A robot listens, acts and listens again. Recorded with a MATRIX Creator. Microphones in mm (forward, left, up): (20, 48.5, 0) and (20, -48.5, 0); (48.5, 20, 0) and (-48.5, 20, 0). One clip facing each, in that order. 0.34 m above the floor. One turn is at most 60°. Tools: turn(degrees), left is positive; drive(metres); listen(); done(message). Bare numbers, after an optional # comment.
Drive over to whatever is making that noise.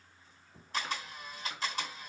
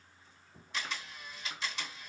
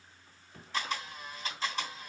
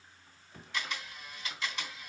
# The camera shutter: 50° left.
turn(50)
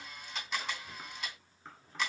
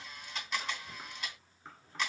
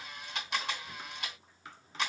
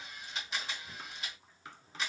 drive(1.0)
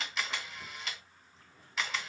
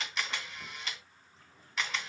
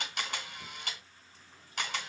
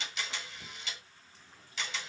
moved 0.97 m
drive(1.0)
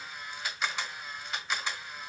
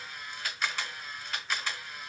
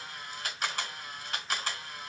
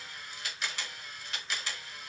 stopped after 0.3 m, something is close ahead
# The camera shutter is now 10° left.
turn(10)
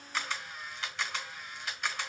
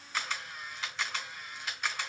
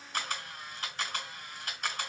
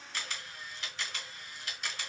done("I am next to the camera shutter.")